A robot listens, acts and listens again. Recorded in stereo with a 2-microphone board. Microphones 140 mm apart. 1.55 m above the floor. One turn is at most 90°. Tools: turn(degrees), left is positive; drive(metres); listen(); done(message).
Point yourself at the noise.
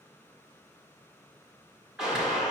turn(degrees=-30)
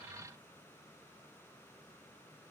listen()
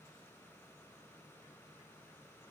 done("I heard a gunshot, but can't make it out now. It was about 25° left or 145° right.")